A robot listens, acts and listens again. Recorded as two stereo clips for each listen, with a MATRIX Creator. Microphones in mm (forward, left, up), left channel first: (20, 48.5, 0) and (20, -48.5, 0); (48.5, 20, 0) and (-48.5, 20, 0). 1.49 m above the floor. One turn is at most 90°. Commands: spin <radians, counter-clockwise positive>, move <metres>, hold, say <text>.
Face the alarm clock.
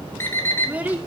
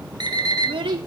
spin 1.57
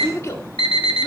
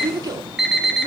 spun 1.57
spin 1.57
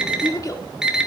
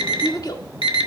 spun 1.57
spin -0.17
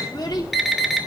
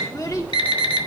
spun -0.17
say Facing the alarm clock, 2 to 4 m away.